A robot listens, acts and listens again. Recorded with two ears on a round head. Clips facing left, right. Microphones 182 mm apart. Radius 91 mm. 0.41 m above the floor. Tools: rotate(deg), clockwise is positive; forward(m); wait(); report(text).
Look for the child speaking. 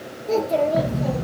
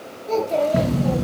rotate(-30)
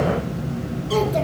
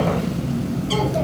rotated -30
wait()
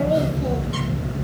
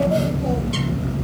wait()
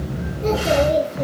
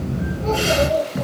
rotate(-120)
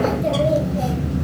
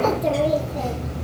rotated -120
wait()
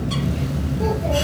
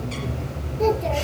wait()
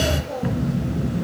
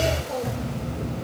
rotate(15)
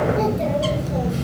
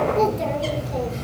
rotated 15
wait()
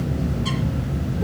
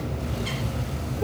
wait()
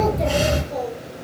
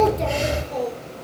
report("Found it: a child speaking, straight ahead, over 4 m away.")